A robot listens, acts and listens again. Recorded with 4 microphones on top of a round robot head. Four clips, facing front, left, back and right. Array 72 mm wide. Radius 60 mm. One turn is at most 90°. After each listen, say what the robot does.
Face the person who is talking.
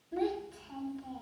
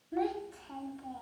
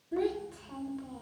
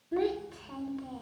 Turn 90° right.
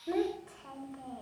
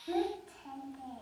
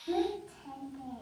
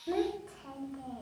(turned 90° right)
Turn 35° right.
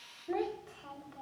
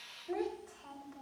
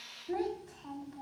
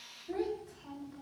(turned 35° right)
Turn 20° left.
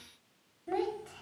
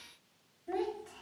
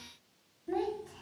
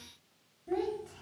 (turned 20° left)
Facing the child speaking, over 4 m away.